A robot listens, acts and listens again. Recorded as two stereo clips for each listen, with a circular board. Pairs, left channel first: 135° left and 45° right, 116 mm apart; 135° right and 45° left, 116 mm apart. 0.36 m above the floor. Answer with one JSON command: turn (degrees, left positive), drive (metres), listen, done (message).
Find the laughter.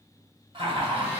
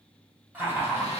{"turn": -15}
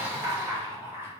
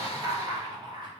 {"turn": 20}
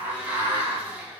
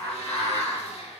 {"turn": 25}
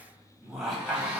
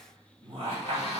{"turn": 45}
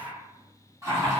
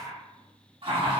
{"turn": 15}
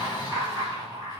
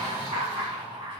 {"done": "Found it: laughter, straight ahead."}